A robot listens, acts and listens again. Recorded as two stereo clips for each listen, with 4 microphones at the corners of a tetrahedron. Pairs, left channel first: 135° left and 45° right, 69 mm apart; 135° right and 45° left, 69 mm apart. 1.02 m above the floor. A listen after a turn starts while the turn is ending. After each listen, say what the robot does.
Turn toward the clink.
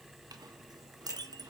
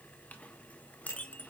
Turn 65° right.
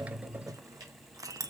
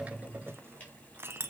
Turn 10° right.
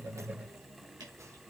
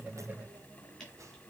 Keep listening.
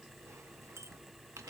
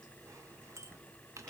Facing the clink.